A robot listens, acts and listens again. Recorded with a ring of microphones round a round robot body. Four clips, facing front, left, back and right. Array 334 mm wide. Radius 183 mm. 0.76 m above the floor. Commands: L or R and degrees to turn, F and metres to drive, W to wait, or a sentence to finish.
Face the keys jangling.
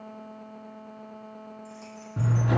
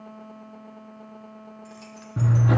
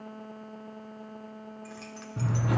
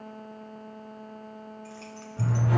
L170
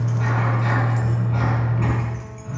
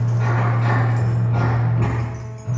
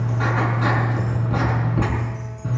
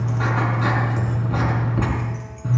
W
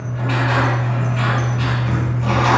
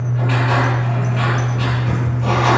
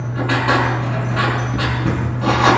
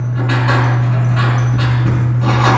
W
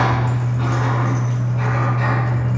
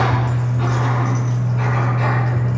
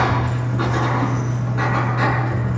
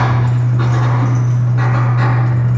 I heard keys jangling from this way, but can't make it out now.